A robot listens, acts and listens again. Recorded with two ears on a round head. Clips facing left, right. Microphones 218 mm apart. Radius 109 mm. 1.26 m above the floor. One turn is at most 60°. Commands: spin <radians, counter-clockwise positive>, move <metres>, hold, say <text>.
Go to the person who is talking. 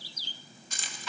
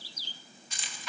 hold
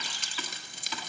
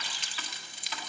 hold
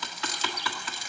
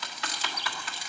say I can't make out anyone speaking, only typing on a keyboard and keys jangling.